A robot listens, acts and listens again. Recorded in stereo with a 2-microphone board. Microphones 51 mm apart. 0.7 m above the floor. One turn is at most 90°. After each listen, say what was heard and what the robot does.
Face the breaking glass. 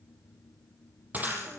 The breaking glass: about 35° right or 145° right. Turn 35° right.
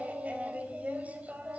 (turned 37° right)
Keep listening.
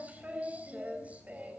I heard breaking glass, but can't make it out now. It was about straight ahead or 105° right.